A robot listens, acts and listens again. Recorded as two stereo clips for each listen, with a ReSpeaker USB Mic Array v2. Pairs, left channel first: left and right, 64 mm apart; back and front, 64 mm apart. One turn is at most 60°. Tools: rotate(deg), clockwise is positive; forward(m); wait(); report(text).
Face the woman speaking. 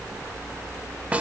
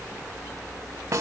wait()
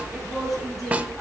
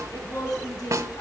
rotate(-60)
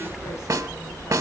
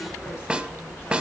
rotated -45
rotate(-60)
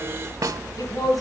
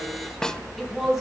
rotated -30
rotate(-60)
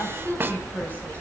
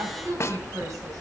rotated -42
rotate(-30)
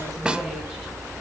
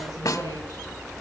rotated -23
wait()
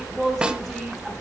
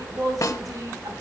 report("Found it: a woman speaking, straight ahead.")